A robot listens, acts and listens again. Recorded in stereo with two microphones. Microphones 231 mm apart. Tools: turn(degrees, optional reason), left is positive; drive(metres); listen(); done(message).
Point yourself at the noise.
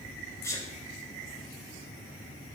turn(degrees=30)
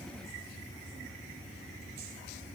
listen()
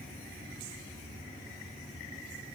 done("I heard a sneeze, but can't make it out now. It was about 20° right or 140° left.")